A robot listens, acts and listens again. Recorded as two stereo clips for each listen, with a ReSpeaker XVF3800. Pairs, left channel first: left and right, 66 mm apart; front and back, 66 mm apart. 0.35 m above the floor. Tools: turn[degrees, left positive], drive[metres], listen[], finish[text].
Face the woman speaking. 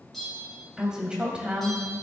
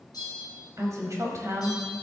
Thought: The woman speaking: 150° right.
Action: turn[-150]
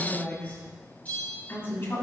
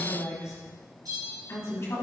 Thought: The woman speaking is now 45° left.
Action: turn[45]
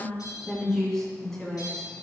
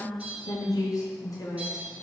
Action: finish[Facing the woman speaking.]